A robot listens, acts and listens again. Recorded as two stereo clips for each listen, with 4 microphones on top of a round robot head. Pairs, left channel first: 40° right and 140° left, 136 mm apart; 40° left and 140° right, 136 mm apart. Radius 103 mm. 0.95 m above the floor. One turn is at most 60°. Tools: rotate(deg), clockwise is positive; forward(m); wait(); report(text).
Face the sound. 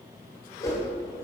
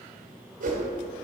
rotate(60)
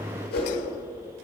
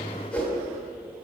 rotate(40)
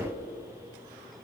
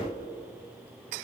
wait()
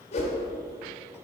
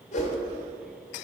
report("Found it: a whoosh, straight ahead, 1 to 2 m away.")